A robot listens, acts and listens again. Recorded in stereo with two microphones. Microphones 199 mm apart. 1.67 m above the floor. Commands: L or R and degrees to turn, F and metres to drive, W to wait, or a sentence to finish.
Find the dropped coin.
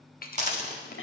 R35
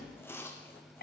W
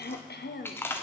I heard a dropped coin, but can't make it out now. It was about straight ahead or 110° right.